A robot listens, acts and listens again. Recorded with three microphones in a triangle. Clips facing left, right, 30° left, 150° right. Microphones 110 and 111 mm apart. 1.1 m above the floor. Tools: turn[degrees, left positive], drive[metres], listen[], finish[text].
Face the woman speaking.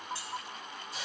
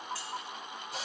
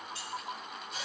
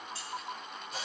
Action: listen[]
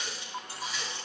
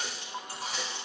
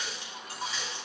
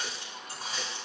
Action: listen[]
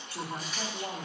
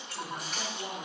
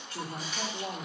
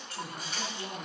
Thought: The woman speaking: 25° left.
Action: turn[25]
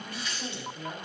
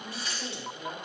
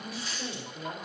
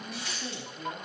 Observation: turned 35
Action: finish[Facing the woman speaking.]